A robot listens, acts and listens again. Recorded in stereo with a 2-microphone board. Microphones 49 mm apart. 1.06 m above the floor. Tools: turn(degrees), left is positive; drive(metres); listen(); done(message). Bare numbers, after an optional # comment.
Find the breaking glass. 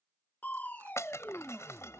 # The breaking glass: about 70° left or 110° left.
turn(70)
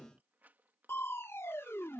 listen()
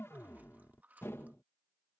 done("I heard breaking glass, but can't make it out now. It was about straight ahead or 40° left.")